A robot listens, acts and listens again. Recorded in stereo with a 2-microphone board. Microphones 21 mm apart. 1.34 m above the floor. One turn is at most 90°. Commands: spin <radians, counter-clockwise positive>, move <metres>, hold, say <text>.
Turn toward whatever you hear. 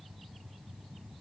hold
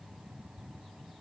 hold
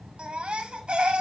spin -1.05
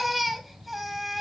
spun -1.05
say Found it: a baby crying, straight ahead.